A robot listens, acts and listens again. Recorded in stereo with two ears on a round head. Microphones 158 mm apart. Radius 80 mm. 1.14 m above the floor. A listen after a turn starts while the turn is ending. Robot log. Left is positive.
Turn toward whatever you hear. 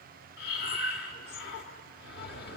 note: The breathing: about 60° left or 120° left.
cmd yaw +60
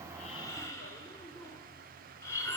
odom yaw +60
note: So it is at 20° left.
cmd yaw +20
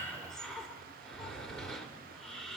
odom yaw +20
end: Found it: breathing, straight ahead, 1 to 2 m away.